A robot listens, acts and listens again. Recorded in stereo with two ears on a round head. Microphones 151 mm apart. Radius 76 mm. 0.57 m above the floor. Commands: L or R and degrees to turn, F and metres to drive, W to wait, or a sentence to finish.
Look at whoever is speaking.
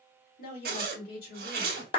L60
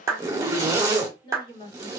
L35
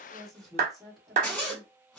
Facing the woman speaking, 1 to 2 m away.